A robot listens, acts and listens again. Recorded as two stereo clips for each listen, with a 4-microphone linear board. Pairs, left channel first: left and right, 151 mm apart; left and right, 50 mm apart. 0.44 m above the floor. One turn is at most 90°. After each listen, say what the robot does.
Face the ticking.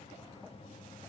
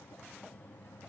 Keep listening.
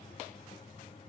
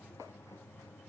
Keep listening.
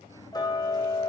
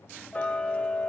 Turn 25° left.
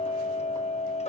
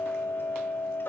Turn 90° left.
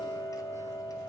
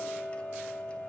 Turn 25° left.
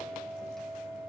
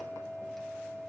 Found it: ticking, straight ahead.